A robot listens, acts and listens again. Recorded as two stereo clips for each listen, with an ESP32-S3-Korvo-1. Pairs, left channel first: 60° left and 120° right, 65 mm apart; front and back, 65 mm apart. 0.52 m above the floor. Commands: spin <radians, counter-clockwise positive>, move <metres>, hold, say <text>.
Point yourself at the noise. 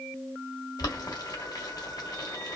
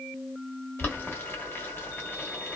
spin 0.96
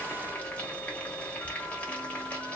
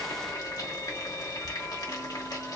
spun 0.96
spin -0.17
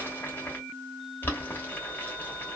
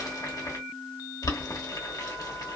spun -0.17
say Facing the boiling, 1 to 2 m away.